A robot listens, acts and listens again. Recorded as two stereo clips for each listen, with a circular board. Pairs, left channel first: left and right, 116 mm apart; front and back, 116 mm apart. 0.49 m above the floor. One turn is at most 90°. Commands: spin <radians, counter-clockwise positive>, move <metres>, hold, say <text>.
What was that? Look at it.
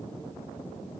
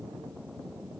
hold
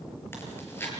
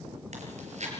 spin 1.57
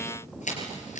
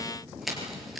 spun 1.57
spin 1.57
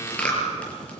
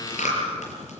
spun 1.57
spin 0.17
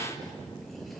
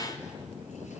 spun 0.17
hold
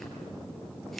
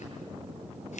say Facing the chewing.